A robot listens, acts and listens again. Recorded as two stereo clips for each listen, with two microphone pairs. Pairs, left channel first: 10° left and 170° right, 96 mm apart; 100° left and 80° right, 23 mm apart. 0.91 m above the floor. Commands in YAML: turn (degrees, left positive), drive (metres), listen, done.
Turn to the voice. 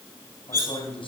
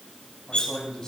turn: 35
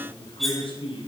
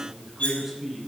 done: "Facing the man speaking, over 4 m away."